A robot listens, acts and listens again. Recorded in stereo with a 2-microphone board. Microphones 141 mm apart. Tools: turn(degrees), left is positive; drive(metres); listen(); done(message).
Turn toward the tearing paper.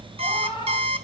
listen()
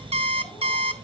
listen()
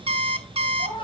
done("I can't make out tearing paper, only a cat meowing and an alarm clock.")